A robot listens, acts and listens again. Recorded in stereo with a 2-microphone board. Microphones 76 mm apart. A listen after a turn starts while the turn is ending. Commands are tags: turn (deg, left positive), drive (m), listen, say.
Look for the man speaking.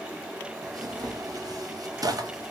<listen/>
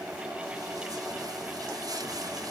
<listen/>
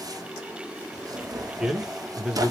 <turn deg="-30"/>
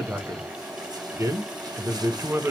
<turn deg="-145"/>
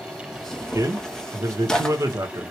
<turn deg="-45"/>
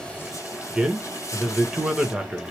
<turn deg="-10"/>
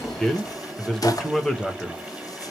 <say>Found it: a man speaking, straight ahead, under 1 m away.</say>